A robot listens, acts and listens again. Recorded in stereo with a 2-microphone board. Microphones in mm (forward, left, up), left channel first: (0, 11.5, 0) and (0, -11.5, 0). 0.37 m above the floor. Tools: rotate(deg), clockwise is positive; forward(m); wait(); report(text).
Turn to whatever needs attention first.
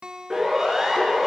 rotate(30)
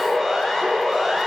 rotate(-15)
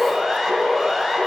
report("Found it: a siren, straight ahead.")